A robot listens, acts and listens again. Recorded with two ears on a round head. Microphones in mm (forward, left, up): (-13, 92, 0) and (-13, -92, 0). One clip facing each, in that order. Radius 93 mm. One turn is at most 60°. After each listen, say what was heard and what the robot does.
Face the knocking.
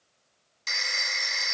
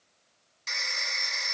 Keep listening.
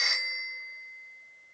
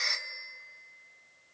Keep listening.
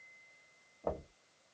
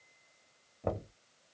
The knocking: about 20° right or 160° right. Turn 20° right.
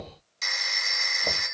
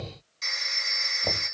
Found it: knocking, straight ahead.